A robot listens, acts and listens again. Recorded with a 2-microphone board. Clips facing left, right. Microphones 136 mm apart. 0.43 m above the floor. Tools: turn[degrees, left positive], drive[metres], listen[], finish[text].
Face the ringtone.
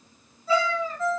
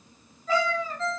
Action: turn[30]
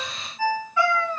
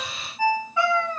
Thought: So it is at 15° right.
Action: turn[-15]
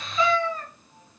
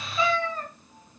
Action: listen[]
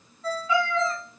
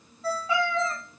Action: finish[Facing the ringtone.]